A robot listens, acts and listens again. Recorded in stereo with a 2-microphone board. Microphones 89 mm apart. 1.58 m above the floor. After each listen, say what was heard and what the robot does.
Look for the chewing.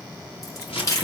The chewing: about 40° left or 140° left. Turn 40° left.
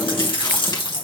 So it is at 100° left. Turn 100° left.
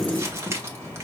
The chewing is now 20° left. Turn 20° left.
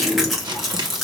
Facing the chewing, 1 to 2 m away.